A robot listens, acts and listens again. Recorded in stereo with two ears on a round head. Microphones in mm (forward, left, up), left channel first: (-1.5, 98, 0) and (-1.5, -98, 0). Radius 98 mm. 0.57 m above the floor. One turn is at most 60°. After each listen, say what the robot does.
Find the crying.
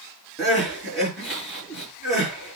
Turn 30° left.
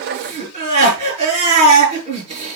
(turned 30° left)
Turn 30° right.
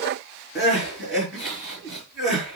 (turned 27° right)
Facing the crying, over 4 m away.